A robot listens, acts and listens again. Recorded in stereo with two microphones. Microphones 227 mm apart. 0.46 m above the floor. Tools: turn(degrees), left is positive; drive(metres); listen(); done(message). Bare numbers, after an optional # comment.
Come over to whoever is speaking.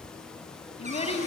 # The child speaking: about 25° left or 155° left.
turn(25)
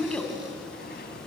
drive(1.0)
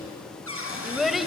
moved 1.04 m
drive(1.0)
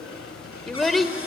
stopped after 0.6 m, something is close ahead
done("I am next to the child speaking.")